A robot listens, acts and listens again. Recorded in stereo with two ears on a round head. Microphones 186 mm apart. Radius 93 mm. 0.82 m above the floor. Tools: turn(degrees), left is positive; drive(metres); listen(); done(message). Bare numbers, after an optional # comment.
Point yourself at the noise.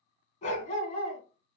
# The dog barking: about 30° left or 150° left.
turn(30)
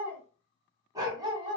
# So it is at 25° right.
turn(-25)
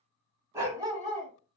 # The dog barking is now 25° right.
turn(-25)
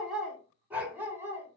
# The dog barking is now 15° right.
turn(-15)
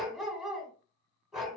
done("Facing the dog barking, 2 to 4 m away.")